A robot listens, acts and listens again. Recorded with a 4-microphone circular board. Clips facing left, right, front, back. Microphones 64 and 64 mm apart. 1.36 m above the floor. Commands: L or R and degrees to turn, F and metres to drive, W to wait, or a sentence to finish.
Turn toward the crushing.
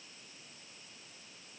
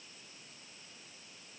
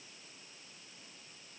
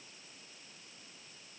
W
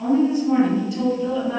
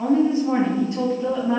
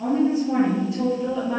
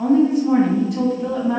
W
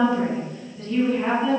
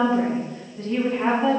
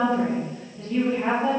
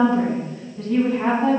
I can't make out crushing to turn to.